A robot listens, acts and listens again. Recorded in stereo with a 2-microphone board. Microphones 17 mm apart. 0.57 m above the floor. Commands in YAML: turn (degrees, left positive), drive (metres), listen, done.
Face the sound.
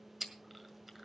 turn: -30
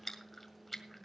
turn: 15
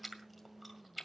done: "Found it: chewing, straight ahead, 1 to 2 m away."